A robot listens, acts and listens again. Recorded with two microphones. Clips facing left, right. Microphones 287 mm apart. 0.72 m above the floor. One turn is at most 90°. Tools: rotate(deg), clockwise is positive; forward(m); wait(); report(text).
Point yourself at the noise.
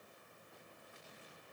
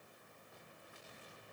wait()
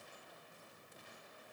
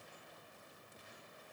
wait()
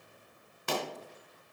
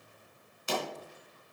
rotate(-65)
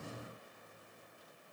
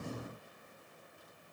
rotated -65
wait()
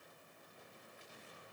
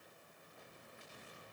report("I heard a pop, but can't make it out now. It was about straight ahead or 50° left.")